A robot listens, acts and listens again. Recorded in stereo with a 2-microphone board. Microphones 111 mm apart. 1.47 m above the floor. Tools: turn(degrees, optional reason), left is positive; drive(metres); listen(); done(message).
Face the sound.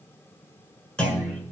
turn(degrees=30)
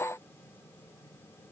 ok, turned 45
listen()
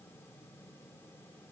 done("I heard a clunk, but can't make it out now. It was about 35° right or 125° left.")